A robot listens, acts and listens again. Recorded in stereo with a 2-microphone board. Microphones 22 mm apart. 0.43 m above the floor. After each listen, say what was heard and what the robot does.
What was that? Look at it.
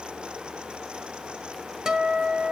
The guitar: about 35° right or 145° right. Turn 35° right.
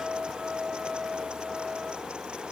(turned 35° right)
So it is at 105° right. Turn 105° right.
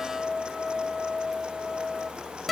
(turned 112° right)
Found it: a guitar, straight ahead.